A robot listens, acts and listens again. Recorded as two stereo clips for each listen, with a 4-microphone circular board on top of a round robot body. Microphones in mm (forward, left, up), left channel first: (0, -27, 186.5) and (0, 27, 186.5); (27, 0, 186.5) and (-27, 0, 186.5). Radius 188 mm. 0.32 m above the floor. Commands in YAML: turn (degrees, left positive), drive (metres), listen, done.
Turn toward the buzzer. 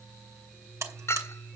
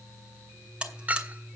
turn: 110
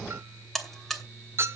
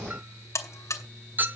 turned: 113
done: "Found it: a buzzer, straight ahead."